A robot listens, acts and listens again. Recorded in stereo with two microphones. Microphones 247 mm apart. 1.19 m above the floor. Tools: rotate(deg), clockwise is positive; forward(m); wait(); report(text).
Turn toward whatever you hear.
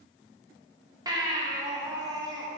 rotate(15)
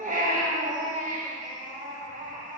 rotate(145)
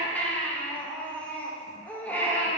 report("Found it: a baby crying, straight ahead.")